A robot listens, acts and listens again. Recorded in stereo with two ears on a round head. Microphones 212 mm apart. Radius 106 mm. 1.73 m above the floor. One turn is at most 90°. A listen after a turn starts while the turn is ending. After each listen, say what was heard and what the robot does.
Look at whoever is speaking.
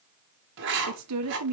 Turn 90° right.
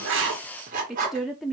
Facing the woman speaking, 1 to 2 m away.